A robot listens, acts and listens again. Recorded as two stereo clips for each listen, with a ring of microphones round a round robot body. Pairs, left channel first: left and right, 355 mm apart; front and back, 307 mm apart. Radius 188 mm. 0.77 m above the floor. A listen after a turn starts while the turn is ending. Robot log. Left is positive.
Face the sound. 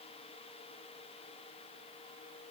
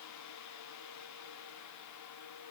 cmd idle
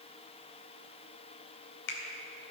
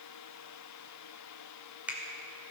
note: The finger snap: 95° left.
cmd yaw +95
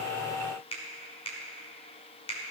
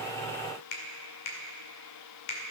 note: The finger snap is now 15° left.
cmd yaw +15
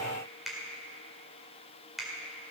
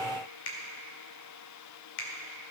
end: Facing the finger snap.